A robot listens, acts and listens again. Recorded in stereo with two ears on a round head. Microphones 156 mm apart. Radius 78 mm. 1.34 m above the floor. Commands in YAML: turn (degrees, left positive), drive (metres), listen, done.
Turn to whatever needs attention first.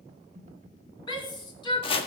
turn: 25
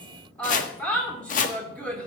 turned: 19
done: "Facing the shout."